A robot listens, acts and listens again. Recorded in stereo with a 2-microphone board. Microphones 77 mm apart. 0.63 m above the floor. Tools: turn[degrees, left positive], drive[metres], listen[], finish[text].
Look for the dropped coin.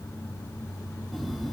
Action: listen[]
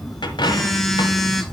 Action: turn[90]
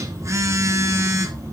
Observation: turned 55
Thought: Nothing new. It was at 35° left.
Action: turn[35]
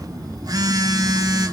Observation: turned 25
Thought: Nothing new. It was at 10° left.
Action: turn[10]
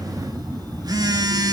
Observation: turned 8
Action: finish[Facing where the dropped coin came from. I can't hear it now.]